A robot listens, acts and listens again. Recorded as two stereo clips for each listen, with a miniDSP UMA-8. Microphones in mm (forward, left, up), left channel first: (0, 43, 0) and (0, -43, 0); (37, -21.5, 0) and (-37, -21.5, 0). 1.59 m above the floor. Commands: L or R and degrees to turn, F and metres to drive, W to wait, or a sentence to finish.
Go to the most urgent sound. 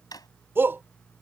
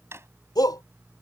R25
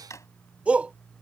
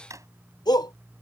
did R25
R15
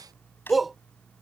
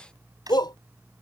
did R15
F1.0
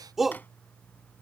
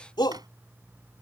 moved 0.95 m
F1.0
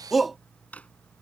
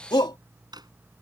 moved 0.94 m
F1.0
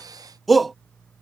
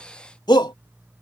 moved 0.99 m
F1.0
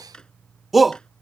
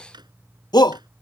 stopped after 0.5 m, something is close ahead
I am next to the shout.